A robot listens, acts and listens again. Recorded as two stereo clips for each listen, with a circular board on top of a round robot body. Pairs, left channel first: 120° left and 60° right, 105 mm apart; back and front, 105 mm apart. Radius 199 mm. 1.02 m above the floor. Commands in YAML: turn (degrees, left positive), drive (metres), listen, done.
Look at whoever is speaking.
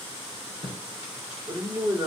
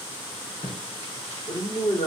turn: -150
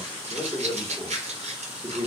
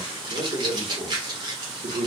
done: "Facing the man speaking, 1 to 2 m away."